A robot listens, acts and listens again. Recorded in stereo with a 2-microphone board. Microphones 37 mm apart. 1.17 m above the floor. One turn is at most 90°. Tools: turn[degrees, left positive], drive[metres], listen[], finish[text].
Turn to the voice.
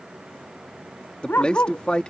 Thought: The man speaking: about 30° left or 150° left.
Action: turn[30]
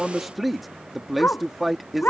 Action: finish[Facing the man speaking.]